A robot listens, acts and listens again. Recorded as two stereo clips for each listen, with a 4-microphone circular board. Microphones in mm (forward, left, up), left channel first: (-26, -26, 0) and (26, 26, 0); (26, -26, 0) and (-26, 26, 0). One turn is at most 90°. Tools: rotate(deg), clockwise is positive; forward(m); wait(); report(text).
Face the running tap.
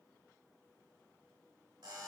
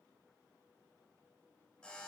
wait()
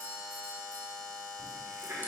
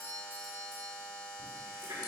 rotate(-90)
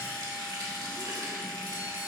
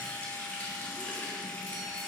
rotate(-20)
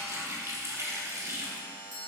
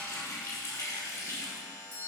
report("Facing the running tap, 1 to 2 m away.")